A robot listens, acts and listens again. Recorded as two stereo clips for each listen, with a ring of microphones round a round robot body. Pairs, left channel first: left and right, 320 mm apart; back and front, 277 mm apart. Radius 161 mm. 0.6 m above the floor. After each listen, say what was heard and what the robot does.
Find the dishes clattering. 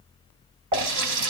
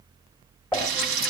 The dishes clattering: 90° right. Turn 90° right.
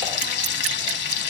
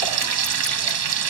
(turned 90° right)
Keep listening.
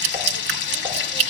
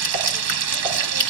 Keep listening.
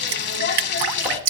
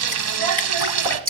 Facing where the dishes clattering came from. I can't hear it now.